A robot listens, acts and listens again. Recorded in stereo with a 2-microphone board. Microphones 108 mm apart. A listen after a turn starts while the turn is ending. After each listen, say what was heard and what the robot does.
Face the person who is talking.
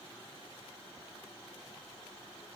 Keep listening.
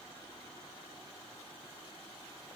Keep listening.
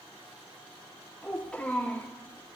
Turn 30° left.
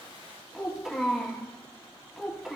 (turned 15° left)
Facing the child speaking.